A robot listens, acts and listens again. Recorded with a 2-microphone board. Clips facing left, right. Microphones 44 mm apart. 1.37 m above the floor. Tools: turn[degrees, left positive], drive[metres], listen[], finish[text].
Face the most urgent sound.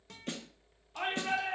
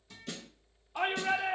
Thought: The shout: about 15° right or 165° right.
Action: turn[-15]
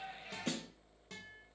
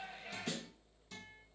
Action: finish[Facing the shout, 1 to 2 m away.]